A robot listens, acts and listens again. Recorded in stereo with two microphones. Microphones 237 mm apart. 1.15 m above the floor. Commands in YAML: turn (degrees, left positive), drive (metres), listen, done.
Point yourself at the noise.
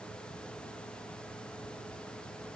listen: true
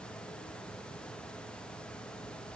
listen: true
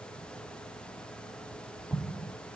turn: -30
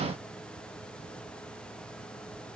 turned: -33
listen: true
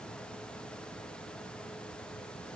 done: "I heard an explosion, but can't make it out now. It was about 30° left or 145° right."